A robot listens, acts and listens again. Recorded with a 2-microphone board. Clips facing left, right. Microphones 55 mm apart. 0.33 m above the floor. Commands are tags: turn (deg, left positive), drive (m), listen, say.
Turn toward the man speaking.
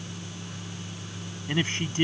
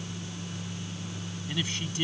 <turn deg="35"/>
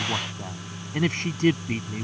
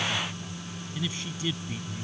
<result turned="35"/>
<turn deg="125"/>
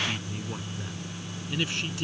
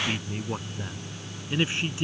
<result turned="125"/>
<turn deg="-25"/>
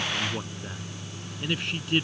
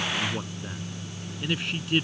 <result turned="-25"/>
<say>Found it: a man speaking, straight ahead.</say>